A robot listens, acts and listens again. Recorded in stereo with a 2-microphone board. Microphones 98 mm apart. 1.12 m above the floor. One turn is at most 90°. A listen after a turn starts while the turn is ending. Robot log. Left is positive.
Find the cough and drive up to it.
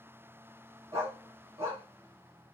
cmd idle
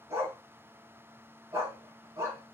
cmd idle
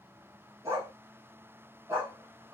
end: I can't make out a cough to turn to.